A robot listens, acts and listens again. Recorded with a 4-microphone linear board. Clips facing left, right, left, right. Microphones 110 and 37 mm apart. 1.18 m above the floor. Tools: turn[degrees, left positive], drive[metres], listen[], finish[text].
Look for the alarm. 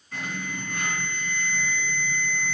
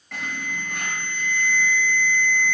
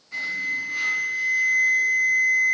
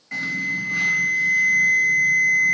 Action: turn[-90]
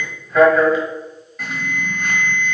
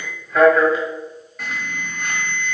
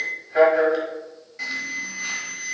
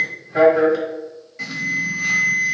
Action: finish[Facing the alarm, 1 to 2 m away.]